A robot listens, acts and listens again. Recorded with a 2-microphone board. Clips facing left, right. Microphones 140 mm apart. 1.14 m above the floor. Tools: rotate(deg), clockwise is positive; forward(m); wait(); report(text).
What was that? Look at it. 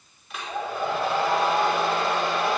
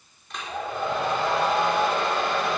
rotate(-30)
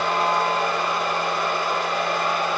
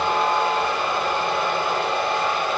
rotate(25)
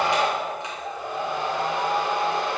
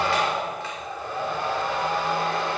rotate(-20)
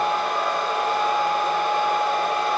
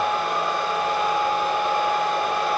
report("Facing the hair dryer.")